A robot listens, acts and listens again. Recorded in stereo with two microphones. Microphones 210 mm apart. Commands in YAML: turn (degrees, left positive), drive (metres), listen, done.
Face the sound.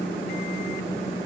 listen: true
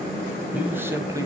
turn: -15
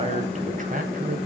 turn: -130
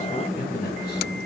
turn: 45
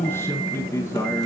turn: 15
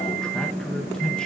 done: "Found it: a man speaking, straight ahead, 2 to 4 m away."